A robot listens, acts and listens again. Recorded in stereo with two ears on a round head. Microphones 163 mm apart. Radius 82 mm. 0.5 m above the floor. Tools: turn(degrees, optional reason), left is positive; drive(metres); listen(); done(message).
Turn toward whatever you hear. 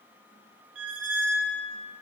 turn(degrees=-75, reason="The squeak: about 75° right or 105° right.")
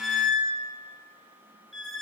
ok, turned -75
done("Found it: a squeak, straight ahead.")